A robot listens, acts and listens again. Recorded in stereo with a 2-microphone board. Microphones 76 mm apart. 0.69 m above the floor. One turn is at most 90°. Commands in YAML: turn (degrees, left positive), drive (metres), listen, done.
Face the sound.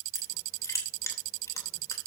turn: 40
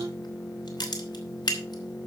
turn: 90
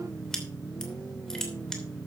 turn: 10
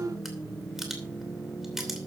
done: "Found it: crushing, straight ahead."